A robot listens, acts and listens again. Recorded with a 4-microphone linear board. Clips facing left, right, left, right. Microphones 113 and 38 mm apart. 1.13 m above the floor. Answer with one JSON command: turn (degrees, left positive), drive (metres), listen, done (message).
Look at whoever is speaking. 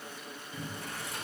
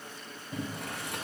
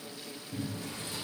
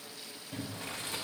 {"listen": true}
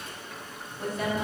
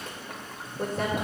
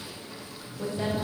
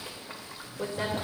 {"turn": -50}
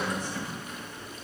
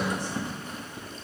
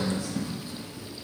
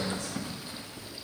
{"listen": true}
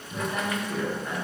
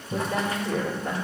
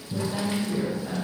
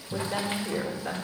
{"turn": -75}
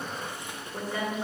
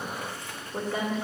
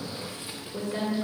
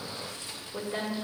{"turn": -20}
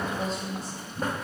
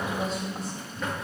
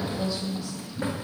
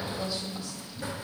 {"done": "Facing the woman speaking."}